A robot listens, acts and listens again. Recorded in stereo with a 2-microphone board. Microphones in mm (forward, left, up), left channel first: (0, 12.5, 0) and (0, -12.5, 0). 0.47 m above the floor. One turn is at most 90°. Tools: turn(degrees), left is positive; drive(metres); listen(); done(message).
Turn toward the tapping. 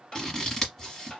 turn(degrees=30)
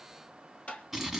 turn(degrees=90)
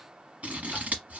turn(degrees=30)
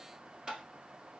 turn(degrees=-30)
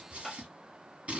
done("Facing the tapping.")